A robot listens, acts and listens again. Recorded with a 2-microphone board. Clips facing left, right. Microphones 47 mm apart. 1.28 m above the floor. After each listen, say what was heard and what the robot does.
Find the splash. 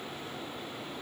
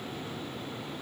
Keep listening.
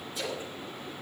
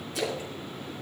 Turn 90° right.
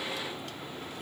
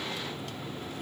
I heard a splash from this way, but can't make it out now.